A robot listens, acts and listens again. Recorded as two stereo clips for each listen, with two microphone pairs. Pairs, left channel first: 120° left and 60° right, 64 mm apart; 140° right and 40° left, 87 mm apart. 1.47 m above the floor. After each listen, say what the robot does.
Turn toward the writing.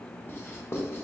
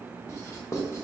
Turn 170° left.
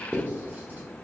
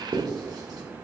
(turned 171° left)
Facing the writing.